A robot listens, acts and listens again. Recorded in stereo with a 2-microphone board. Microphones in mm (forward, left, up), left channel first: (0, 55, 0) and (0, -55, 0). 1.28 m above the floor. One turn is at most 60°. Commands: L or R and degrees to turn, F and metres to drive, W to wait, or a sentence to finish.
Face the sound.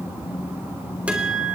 R30
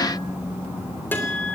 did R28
L20
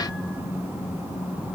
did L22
W
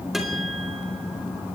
W
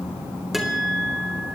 Found it: a guitar, straight ahead.